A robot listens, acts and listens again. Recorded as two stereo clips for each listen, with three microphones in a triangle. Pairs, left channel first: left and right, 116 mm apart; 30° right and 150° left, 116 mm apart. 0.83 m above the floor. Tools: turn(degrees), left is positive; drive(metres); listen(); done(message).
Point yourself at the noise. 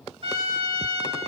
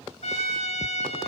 turn(degrees=-50)
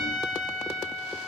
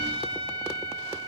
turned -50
turn(degrees=10)
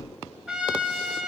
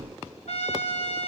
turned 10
done("Facing the trumpet.")